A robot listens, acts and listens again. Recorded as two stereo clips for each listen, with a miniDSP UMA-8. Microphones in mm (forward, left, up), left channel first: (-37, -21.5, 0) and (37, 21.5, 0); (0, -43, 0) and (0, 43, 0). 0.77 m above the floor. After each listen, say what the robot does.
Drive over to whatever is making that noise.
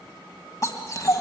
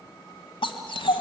Turn 100° right.
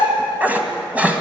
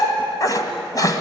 Turn 45° right.
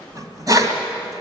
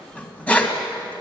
Turn 15° right.
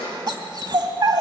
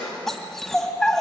Drive 1.0 m forward.
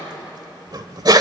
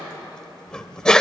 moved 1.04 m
Turn 10° right.
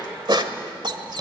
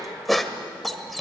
Drive 1.0 m forward.
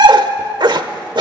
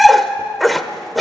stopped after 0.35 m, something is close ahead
Arrived at the dog barking, straight ahead.